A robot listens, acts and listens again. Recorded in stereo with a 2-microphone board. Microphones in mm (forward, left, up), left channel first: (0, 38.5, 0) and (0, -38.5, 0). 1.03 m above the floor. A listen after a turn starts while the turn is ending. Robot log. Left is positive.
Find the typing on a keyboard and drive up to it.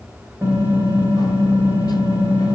note: The typing on a keyboard: about 25° right or 155° right.
cmd yaw -25
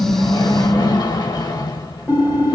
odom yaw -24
cmd fwd 1.0
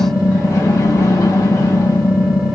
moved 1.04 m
cmd fwd 1.0
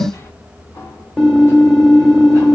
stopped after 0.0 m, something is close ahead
end: Arrived at the typing on a keyboard, straight ahead.